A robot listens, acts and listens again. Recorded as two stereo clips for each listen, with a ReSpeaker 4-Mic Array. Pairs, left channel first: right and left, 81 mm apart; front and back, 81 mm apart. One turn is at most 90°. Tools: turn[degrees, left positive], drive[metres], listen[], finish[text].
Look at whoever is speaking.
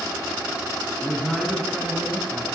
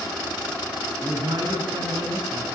Thought: The man speaking: straight behind.
Action: turn[90]
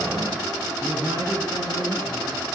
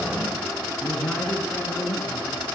Thought: The man speaking is now 85° left.
Action: turn[85]
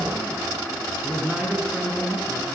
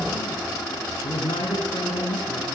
Thought: The man speaking is now 15° left.
Action: turn[15]
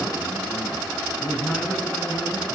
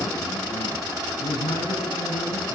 Action: finish[Facing the man speaking.]